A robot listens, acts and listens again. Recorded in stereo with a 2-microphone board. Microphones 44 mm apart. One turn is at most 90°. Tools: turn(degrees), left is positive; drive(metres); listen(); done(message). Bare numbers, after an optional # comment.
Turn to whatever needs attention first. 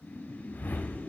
listen()
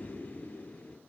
listen()
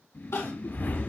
turn(90)
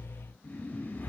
listen()
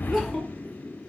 done("Found it: crying, straight ahead.")